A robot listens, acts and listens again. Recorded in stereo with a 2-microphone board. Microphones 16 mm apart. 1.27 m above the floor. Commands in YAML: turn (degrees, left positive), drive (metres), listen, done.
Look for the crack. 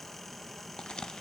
turn: 70
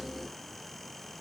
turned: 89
listen: true
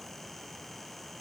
done: "I heard a crack, but can't make it out now. It was about 20° right or 20° left."